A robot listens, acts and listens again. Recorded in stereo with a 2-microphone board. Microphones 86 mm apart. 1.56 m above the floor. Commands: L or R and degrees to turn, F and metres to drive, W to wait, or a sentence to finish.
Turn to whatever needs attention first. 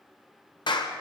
W
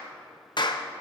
W
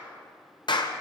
I can't make out anything urgent, only a clap.